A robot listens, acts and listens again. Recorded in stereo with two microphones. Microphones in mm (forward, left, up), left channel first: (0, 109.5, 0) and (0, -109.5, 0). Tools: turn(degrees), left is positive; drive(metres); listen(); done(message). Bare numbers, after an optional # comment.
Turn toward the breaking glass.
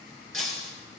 # The breaking glass: about 70° right or 110° right.
turn(-70)
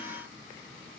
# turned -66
listen()
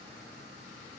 done("I heard breaking glass, but can't make it out now. It was about 5° right or 45° right.")